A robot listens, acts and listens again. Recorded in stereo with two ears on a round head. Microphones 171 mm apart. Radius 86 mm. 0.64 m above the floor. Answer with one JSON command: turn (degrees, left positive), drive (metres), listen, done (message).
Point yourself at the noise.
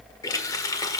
{"turn": 20}
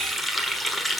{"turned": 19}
{"done": "Found it: a running tap, straight ahead, 1 to 2 m away."}